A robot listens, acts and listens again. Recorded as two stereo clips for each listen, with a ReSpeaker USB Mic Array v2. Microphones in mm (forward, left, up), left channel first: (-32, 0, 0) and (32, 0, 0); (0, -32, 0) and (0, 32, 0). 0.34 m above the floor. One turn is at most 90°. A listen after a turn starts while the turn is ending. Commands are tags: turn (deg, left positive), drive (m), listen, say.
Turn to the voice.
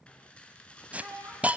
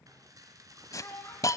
<turn deg="-30"/>
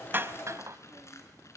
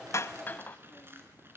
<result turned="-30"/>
<listen/>
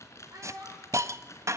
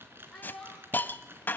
<say>Facing the child speaking, over 4 m away.</say>